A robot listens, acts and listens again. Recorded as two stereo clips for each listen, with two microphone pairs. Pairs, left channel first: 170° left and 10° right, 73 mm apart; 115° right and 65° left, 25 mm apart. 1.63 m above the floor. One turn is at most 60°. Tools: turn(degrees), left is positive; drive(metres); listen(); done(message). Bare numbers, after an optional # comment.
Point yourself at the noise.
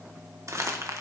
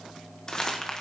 # The crumpling: 55° right.
turn(-55)
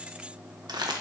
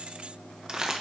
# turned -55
done("Facing the crumpling, 1 to 2 m away.")